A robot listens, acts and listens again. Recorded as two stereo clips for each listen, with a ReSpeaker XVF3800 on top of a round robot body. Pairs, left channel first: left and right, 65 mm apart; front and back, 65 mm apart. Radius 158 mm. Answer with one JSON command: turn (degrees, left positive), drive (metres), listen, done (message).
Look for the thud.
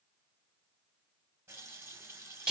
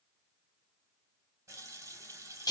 {"listen": true}
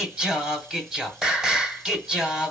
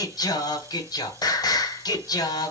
{"listen": true}
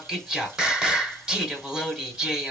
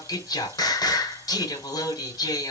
{"done": "I can't make out a thud to turn to."}